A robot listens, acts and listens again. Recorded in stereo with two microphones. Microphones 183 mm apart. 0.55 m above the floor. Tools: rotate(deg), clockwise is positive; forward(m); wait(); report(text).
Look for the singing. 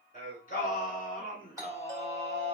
rotate(-60)
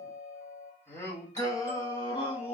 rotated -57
rotate(-30)
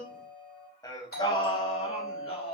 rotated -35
rotate(-30)
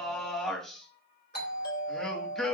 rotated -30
report("Found it: singing, straight ahead, 1 to 2 m away.")